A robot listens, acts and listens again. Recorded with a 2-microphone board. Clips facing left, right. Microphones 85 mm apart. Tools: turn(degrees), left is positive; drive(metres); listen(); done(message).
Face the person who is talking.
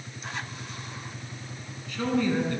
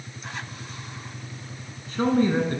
turn(degrees=-35)
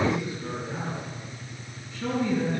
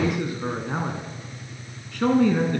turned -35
turn(degrees=-105)
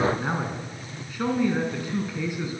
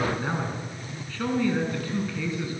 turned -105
turn(degrees=15)
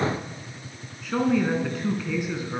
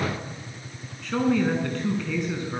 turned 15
done("Facing the man speaking, over 4 m away.")